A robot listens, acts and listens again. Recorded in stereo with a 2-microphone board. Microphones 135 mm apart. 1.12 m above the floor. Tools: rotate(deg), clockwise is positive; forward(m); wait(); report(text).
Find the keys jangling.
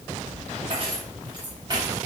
rotate(30)
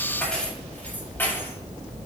rotate(-15)
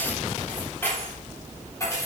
rotate(-25)
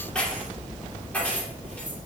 rotate(-10)
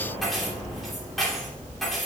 report("Facing the keys jangling.")